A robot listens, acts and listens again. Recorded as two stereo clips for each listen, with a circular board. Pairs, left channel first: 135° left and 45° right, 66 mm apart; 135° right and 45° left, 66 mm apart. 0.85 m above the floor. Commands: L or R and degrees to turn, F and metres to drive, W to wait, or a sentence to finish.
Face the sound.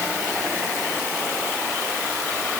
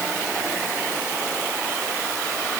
W
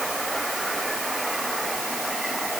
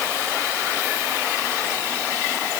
W
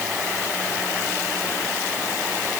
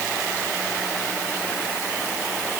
I can't make out anything.